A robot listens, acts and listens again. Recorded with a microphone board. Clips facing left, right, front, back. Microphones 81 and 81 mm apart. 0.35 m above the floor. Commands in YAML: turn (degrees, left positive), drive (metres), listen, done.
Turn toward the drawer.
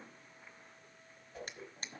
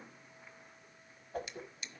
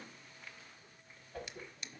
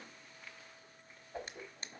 turn: 130
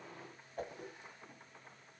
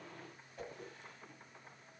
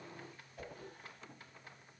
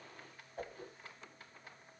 listen: true
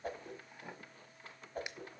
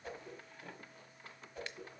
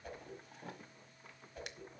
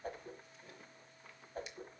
turn: 15
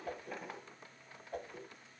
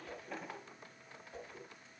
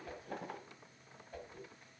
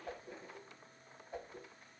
done: "Found it: a drawer, straight ahead, 1 to 2 m away."